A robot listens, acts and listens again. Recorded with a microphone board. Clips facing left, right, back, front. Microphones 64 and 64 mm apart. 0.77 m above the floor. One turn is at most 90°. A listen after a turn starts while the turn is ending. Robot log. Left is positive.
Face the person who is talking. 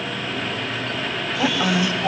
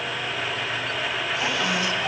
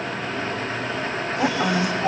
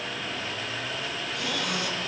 note: The woman speaking: 150° left.
cmd yaw +90
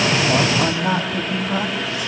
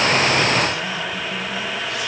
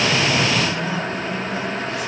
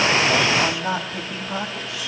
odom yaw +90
note: The woman speaking is now 40° left.
cmd yaw +40
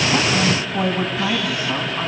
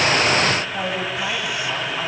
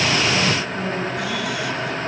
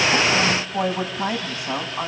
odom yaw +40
end: Facing the woman speaking.